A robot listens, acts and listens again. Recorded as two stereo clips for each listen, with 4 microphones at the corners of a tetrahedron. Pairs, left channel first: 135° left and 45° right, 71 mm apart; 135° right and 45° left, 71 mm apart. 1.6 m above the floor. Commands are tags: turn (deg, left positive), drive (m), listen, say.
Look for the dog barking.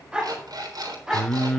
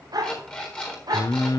<turn deg="40"/>
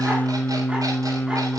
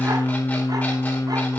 <listen/>
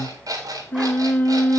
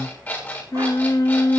<listen/>
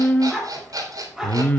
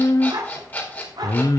<turn deg="40"/>
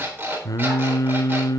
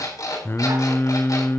<listen/>
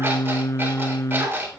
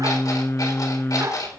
<turn deg="10"/>
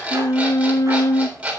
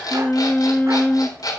<listen/>
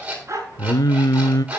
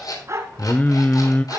<say>Facing the dog barking.</say>